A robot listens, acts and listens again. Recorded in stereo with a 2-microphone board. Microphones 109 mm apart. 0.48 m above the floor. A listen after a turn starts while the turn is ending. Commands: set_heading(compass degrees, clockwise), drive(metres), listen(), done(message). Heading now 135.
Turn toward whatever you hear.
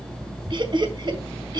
set_heading(175)
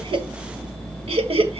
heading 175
set_heading(295)
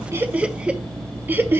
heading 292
set_heading(312)
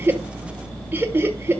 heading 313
set_heading(333)
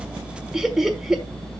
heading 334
done("Facing the laughter.")